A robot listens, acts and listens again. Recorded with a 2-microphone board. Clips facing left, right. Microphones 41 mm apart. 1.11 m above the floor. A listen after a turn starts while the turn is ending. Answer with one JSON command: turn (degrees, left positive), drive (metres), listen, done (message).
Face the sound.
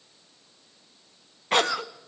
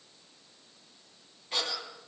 {"turn": 60}
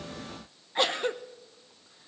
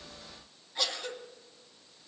{"turn": 40}
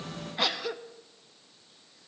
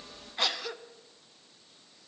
{"done": "Found it: a cough, straight ahead, under 1 m away."}